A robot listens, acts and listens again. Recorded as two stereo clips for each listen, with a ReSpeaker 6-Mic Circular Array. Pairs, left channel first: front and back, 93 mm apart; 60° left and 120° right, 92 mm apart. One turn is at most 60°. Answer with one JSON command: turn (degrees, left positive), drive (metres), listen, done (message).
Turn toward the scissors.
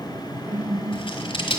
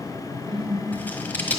{"turn": -10}
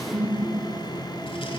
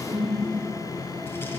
{"listen": true}
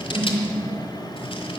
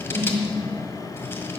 {"listen": true}
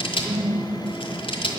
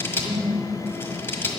{"done": "Facing the scissors, 1 to 2 m away."}